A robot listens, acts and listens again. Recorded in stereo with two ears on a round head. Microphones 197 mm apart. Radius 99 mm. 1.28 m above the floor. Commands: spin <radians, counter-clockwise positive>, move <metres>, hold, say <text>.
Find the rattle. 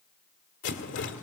spin 0.96
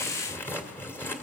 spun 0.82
spin 0.17
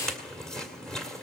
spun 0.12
say Found it: a rattle, straight ahead.